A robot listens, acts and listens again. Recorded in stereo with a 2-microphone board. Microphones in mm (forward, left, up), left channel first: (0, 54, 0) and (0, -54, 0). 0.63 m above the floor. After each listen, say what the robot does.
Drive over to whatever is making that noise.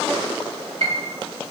Turn 75° right.
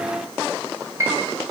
Turn 30° right.
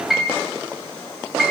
Drive 1.0 m forward.
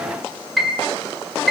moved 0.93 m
Drive 1.0 m forward.
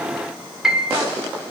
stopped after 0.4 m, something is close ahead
I am next to the piano.